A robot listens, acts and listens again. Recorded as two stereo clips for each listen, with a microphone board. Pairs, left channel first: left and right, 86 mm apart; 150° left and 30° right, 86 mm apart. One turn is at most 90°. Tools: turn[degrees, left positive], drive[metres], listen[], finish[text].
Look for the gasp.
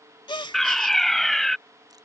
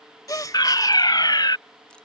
Thought: The gasp: 105° left.
Action: turn[90]
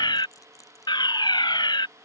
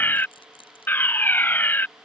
Thought: Nothing new. It was at 15° left.
Action: turn[15]
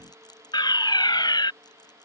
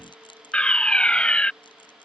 Action: finish[Facing where the gasp came from. I can't hear it now.]